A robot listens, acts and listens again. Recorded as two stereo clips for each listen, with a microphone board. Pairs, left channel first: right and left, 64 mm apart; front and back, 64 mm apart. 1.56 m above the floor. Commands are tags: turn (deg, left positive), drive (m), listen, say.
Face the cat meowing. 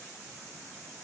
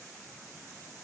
<listen/>
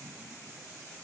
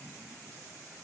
<listen/>
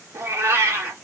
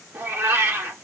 <turn deg="130"/>
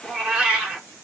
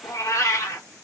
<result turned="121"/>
<turn deg="10"/>
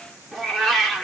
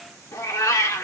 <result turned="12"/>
<say>Facing the cat meowing.</say>